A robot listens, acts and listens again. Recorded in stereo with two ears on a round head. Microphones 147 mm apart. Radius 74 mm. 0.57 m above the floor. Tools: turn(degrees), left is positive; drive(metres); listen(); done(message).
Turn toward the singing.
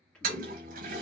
turn(degrees=30)
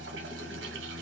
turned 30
turn(degrees=-25)
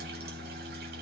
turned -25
done("Facing the singing, 1 to 2 m away.")